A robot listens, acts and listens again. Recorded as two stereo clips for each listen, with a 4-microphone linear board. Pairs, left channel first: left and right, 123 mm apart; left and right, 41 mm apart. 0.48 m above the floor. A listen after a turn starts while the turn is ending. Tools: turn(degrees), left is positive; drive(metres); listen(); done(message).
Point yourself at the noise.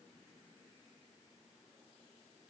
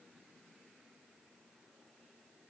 listen()
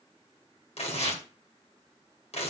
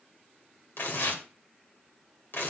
turn(degrees=60)
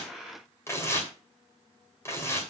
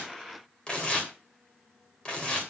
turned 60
turn(degrees=25)
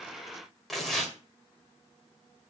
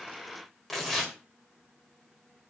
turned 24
done("Found it: tearing paper, straight ahead, 2 to 4 m away.")